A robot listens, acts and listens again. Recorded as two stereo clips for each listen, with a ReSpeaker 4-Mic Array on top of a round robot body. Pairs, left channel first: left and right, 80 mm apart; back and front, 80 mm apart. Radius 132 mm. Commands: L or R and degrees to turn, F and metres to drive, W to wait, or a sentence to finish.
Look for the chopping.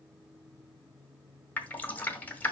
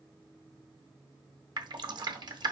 W
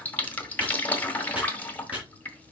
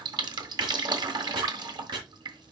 R20
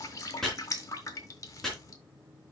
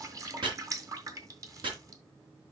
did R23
Facing the chopping, 2 to 4 m away.